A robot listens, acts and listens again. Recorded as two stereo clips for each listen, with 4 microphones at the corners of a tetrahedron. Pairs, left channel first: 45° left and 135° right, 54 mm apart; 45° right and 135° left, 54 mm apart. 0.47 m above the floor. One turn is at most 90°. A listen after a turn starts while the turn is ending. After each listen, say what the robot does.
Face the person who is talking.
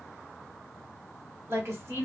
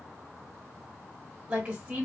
Turn 90° right.
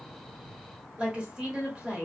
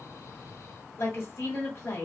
Turn 70° right.
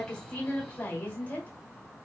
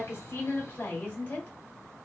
Found it: a woman speaking, straight ahead, 1 to 2 m away.